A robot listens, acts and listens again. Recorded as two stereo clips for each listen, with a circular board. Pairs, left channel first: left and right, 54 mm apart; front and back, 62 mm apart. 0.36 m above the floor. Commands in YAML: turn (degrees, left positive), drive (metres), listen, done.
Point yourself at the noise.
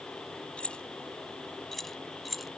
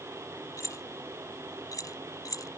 done: "Facing the keys jangling."